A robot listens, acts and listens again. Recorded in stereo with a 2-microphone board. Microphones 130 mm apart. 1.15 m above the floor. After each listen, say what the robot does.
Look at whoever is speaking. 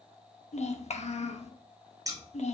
Turn 65° left.
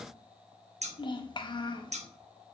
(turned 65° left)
Turn 40° left.
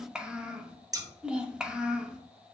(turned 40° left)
Turn 10° right.
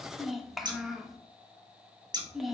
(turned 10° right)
Found it: a child speaking, straight ahead, under 1 m away.